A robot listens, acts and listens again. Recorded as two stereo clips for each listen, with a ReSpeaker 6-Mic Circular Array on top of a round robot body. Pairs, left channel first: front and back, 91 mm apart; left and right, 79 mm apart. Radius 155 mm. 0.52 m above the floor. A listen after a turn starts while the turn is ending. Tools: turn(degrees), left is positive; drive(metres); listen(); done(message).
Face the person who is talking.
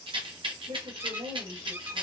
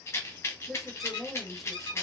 turn(degrees=180)
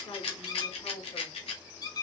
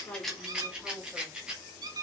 done("Facing the woman speaking.")